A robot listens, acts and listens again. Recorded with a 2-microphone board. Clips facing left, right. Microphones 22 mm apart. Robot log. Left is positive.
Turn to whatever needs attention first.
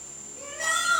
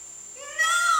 note: The shout: about 75° right or 105° right.
cmd yaw -75
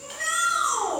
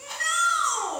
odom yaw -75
note: So it is at 15° right.
cmd yaw -15
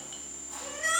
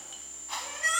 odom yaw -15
end: Facing the shout.